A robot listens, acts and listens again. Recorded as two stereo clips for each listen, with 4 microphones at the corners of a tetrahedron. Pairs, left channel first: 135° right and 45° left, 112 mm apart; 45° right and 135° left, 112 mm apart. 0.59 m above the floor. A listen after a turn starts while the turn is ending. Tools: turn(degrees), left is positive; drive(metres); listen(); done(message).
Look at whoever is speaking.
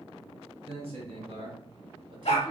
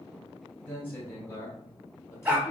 turn(degrees=20)
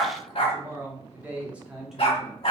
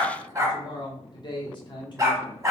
turn(degrees=-50)
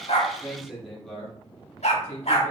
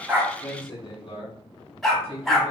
turn(degrees=-60)
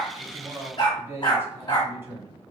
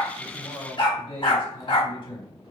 turn(degrees=-20)
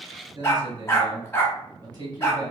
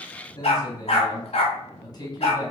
done("Found it: a man speaking, straight ahead.")